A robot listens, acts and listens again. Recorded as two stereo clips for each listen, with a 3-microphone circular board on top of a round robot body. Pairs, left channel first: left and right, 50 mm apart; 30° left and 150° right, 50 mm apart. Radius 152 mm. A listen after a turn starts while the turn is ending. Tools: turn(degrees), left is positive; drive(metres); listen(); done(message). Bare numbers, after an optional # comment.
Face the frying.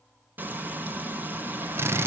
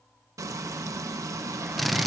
# The frying: 145° right.
turn(-145)
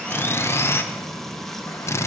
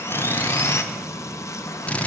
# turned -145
done("Facing the frying.")